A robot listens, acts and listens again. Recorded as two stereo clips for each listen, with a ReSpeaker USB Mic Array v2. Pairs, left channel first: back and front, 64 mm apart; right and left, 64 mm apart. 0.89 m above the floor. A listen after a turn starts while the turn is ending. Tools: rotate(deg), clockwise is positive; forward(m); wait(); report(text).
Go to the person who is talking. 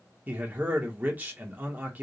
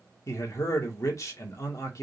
rotate(60)
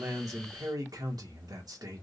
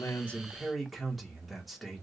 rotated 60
forward(1.0)
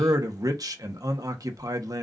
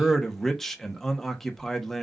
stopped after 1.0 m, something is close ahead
report("Arrived at the man speaking, straight ahead.")